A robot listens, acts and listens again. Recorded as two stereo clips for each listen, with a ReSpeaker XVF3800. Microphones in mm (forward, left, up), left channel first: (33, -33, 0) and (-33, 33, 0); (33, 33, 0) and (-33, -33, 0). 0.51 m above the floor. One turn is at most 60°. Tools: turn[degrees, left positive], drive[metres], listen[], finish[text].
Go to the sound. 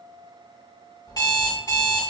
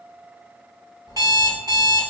Thought: The alarm clock: 90° right.
Action: turn[-60]
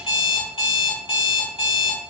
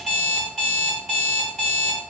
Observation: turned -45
Thought: The alarm clock is now 45° right.
Action: turn[-45]
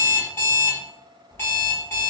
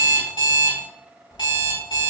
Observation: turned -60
Thought: The alarm clock is now 20° left.
Action: turn[20]
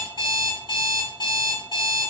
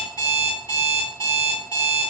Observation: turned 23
Action: drive[1.0]
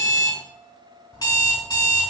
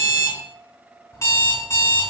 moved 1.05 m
Thought: The alarm clock is now 10° right.
Action: turn[-10]
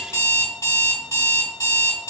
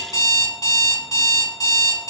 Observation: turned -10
Action: drive[1.0]
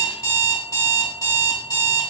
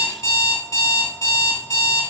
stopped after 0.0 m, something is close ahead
Action: finish[I am next to the alarm clock.]